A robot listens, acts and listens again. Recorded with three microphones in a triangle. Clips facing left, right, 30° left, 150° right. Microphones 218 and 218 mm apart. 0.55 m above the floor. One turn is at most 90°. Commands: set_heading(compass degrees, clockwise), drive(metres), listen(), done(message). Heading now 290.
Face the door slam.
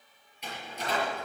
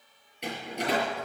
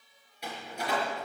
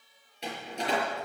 set_heading(20)
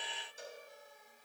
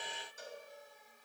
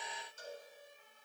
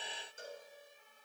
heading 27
set_heading(17)
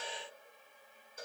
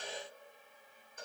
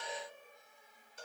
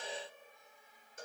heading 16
done("I heard a door slam from this way, but can't make it out now.")